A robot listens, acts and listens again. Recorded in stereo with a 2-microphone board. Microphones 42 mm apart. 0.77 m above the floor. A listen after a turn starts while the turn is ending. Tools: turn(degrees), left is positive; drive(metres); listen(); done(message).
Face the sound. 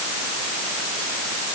listen()
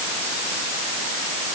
listen()
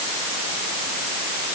done("I can't make out anything.")